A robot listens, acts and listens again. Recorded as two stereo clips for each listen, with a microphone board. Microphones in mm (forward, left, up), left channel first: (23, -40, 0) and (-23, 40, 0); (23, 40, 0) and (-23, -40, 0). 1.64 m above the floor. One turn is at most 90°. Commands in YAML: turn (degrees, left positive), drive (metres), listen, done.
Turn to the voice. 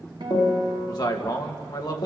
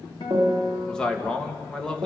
turn: -20
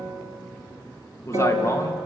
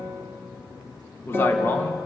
done: "Facing the man speaking, 2 to 4 m away."